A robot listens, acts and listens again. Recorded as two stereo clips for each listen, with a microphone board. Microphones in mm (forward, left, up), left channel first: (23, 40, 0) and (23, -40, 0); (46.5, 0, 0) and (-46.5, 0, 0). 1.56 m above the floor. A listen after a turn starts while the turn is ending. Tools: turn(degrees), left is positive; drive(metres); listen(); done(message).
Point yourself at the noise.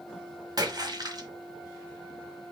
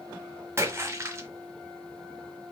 turn(degrees=-115)
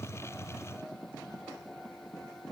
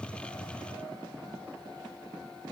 done("Facing where the splash came from. I can't hear it now.")